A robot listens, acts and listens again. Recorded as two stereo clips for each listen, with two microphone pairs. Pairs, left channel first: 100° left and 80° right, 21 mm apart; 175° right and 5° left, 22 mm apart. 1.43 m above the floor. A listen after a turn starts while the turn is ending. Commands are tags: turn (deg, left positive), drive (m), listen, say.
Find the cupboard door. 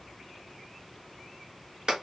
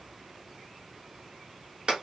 <listen/>
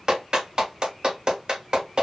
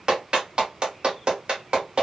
<listen/>
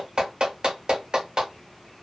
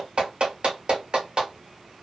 <say>I can't make out a cupboard door to turn to.</say>